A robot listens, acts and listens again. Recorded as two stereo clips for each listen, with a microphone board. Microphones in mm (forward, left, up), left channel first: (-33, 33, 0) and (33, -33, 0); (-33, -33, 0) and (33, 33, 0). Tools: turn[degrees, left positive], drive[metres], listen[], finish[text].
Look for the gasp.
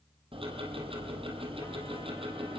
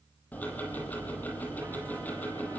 Action: listen[]
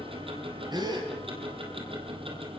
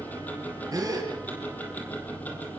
Action: finish[Facing the gasp, over 4 m away.]